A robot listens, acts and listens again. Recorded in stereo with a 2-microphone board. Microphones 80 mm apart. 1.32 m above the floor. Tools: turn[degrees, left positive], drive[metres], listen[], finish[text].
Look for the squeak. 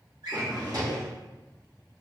Action: listen[]
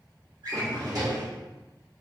Action: listen[]
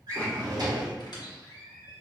Thought: The squeak: about 60° left or 120° left.
Action: turn[60]
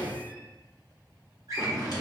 Action: listen[]
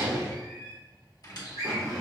Thought: So it is at 55° left.
Action: turn[55]
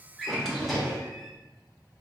Action: listen[]
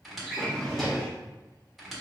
Action: finish[Found it: a squeak, straight ahead, 1 to 2 m away.]